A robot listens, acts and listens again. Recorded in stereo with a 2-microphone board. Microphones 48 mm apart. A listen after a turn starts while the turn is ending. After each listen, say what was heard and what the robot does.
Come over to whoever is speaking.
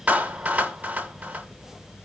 Keep listening.
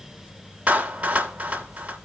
Keep listening.
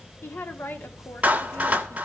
The woman speaking: about 50° left or 130° left. Turn 50° left.
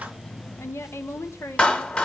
So it is at 75° left. Turn 75° left.
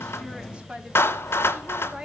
The woman speaking is now 20° right. Turn 20° right.
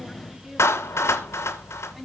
Keep listening.
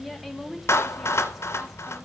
Drive 1.0 m forward.
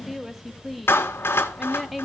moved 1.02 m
Drive 1.0 m forward.
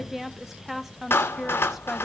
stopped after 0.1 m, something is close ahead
I am next to the woman speaking.